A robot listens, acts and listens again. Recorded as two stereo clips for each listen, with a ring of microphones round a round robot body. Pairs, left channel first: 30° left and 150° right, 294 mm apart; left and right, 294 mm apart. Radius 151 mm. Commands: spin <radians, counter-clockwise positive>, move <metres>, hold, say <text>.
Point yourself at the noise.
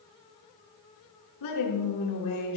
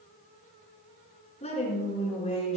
spin 0.35
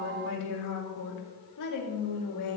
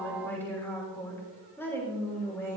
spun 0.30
spin 0.17
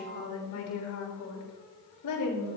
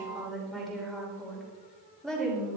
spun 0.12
say Facing the woman speaking.